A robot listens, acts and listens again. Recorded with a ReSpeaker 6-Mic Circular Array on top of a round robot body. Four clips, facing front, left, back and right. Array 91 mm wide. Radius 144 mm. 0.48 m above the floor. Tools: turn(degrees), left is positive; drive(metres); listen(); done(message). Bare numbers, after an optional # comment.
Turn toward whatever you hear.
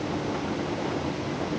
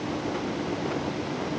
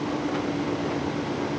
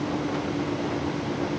listen()
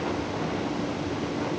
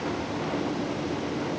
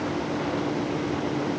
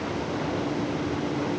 listen()
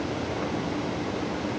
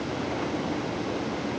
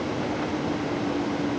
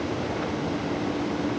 done("I can't make out anything.")